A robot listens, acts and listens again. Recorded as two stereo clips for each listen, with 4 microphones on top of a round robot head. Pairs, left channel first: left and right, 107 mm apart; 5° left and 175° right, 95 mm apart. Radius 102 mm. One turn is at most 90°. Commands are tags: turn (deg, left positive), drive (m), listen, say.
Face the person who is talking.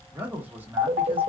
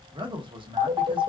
<turn deg="-90"/>
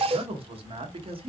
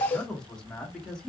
<turn deg="-75"/>
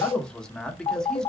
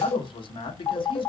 <say>Found it: a man speaking, straight ahead, 1 to 2 m away.</say>